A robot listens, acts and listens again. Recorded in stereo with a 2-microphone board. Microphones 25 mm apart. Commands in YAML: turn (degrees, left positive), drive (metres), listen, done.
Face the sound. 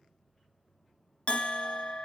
turn: 50
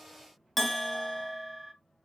done: "Facing the bell."